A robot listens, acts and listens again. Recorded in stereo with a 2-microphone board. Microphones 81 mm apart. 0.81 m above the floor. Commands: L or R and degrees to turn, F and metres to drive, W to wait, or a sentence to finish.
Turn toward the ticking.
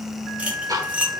R50
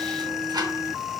W
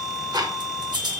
R70
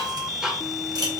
R10
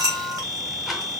W
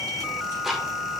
Facing the ticking.